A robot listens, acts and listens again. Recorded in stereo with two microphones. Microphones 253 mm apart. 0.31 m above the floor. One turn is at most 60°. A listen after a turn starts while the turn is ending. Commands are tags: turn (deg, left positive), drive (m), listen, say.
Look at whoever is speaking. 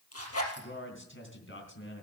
<turn deg="50"/>
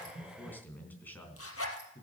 <turn deg="10"/>
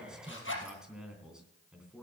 <say>Found it: a man speaking, straight ahead.</say>